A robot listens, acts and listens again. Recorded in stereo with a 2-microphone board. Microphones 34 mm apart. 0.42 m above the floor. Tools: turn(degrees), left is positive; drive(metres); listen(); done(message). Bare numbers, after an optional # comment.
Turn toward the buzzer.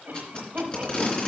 listen()
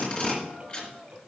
listen()
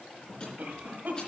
done("I can't make out a buzzer to turn to.")